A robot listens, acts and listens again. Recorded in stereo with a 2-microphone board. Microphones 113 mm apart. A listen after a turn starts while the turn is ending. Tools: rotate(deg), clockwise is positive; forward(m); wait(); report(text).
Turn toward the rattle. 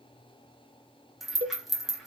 rotate(-30)
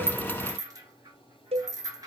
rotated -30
rotate(30)
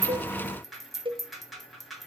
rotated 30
report("Facing the rattle.")